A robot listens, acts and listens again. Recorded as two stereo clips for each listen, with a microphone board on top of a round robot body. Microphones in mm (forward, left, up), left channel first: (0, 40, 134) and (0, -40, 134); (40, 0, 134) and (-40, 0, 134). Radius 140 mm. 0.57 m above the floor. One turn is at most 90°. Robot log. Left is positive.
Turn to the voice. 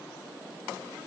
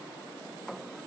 cmd idle
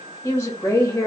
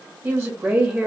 note: The woman speaking: 125° left.
cmd yaw +90
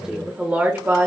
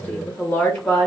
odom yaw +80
note: The woman speaking is now 65° right.
cmd yaw -65
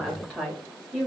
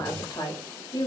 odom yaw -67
note: The woman speaking is now 20° right.
cmd yaw -20
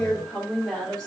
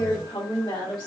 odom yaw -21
end: Facing the woman speaking, 2 to 4 m away.